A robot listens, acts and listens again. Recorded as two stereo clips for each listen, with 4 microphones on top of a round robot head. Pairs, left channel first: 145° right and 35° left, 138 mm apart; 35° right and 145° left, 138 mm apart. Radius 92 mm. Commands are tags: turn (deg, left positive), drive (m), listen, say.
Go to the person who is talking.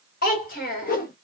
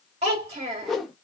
<turn deg="-165"/>
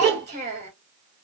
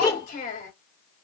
<turn deg="-10"/>
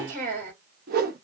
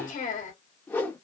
<drive m="1.0"/>
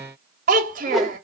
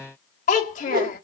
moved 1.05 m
<drive m="1.0"/>
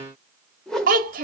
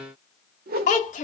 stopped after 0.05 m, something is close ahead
<say>I am next to the child speaking.</say>